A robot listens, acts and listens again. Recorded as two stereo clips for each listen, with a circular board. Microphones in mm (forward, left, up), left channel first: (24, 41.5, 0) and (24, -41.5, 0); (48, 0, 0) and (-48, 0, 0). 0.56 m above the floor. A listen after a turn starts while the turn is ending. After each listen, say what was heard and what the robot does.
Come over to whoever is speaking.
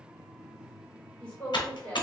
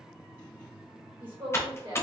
The woman speaking: 165° left. Turn 165° left.
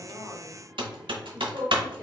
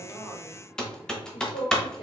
The woman speaking is now 20° left. Turn 20° left.
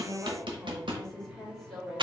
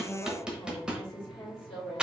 Drive 1.0 m forward.
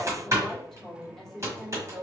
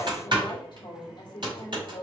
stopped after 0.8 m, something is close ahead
Arrived at the woman speaking, straight ahead.